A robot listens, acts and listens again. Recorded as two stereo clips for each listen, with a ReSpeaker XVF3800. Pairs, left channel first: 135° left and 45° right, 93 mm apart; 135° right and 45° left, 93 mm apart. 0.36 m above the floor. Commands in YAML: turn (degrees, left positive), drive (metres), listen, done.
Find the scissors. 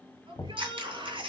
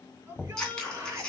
turn: -55
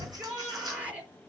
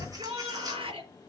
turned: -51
listen: true
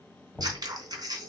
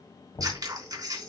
done: "Found it: scissors, straight ahead."